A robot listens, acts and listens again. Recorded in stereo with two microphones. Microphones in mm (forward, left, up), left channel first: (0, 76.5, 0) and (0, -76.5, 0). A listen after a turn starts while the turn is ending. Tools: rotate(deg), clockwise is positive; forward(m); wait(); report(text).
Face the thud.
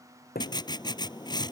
rotate(-90)
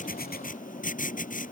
report("I heard a thud from this way, but can't make it out now.")